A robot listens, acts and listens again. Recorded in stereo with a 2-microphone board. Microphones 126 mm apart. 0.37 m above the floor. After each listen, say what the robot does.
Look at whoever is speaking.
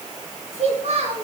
Turn 50° right.
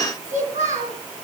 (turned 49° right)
Turn 75° right.
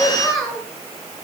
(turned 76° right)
Facing the child speaking, over 4 m away.